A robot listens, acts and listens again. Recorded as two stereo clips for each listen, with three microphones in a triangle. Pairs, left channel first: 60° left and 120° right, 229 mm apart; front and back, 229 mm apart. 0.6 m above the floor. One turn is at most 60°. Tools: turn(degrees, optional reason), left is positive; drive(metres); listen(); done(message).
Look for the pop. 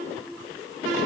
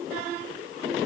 listen()
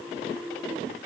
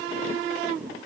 listen()
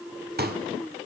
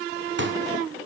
turn(degrees=-60, reason="The pop: 160° right.")
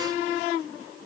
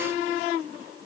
turn(degrees=-60, reason="Nothing new. It was at 100° right.")
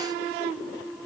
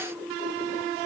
turn(degrees=-40, reason="Nothing new. It was at 40° right.")
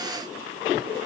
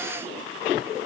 done("I heard a pop from this way, but can't make it out now.")